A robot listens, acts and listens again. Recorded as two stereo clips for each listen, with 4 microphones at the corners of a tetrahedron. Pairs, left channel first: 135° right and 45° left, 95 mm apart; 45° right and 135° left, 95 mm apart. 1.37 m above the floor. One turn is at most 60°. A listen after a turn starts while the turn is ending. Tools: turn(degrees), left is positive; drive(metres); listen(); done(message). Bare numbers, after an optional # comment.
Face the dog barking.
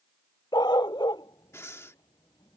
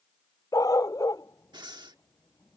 # The dog barking: 95° right.
turn(-60)
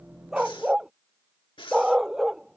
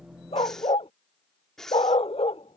# The dog barking is now 40° right.
turn(-40)
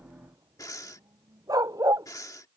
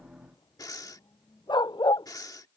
done("Facing the dog barking.")